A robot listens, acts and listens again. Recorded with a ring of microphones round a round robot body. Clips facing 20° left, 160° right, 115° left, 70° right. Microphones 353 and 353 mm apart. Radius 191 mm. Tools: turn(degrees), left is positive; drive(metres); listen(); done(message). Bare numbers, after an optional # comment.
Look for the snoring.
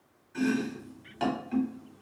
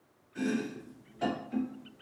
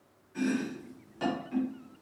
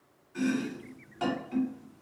listen()
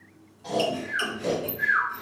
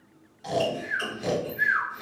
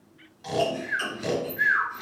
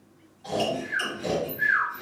# The snoring: 155° left.
turn(155)
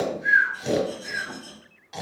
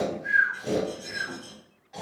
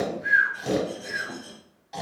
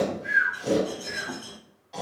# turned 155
# The snoring is now 55° left.
turn(55)
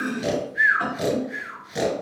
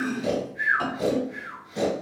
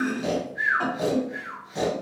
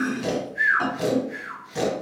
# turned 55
done("Found it: snoring, straight ahead.")